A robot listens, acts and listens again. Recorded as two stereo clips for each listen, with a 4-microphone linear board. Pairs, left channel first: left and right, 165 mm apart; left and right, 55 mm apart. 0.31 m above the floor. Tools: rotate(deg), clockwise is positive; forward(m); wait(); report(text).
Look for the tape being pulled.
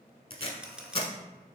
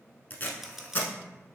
rotate(-35)
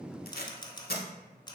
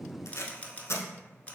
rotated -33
rotate(-110)
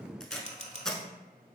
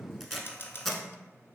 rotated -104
report("Found it: tape being pulled, straight ahead, under 1 m away.")